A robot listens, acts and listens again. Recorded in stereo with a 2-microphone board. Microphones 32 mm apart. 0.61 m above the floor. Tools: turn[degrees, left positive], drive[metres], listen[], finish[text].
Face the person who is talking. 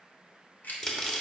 Action: listen[]
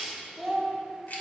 Action: turn[30]
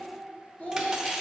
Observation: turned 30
Thought: So it is at 130° left.
Action: turn[130]
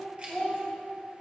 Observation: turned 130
Thought: The child speaking is now 15° left.
Action: turn[15]
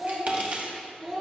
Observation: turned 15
Action: finish[Found it: a child speaking, straight ahead, 2 to 4 m away.]